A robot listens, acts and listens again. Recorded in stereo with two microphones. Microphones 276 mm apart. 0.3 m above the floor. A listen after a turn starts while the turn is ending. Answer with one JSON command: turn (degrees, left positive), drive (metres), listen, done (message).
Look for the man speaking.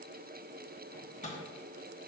{"listen": true}
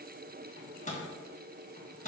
{"listen": true}
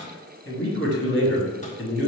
{"turn": 50}
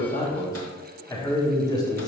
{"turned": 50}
{"turn": 15}
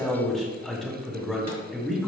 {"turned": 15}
{"done": "Facing the man speaking, 2 to 4 m away."}